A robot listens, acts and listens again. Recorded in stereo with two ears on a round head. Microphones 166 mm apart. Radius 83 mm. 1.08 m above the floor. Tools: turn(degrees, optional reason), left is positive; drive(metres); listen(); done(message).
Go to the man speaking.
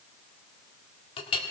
listen()
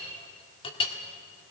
listen()
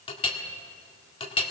done("I can't make out a man speaking, only a clink.")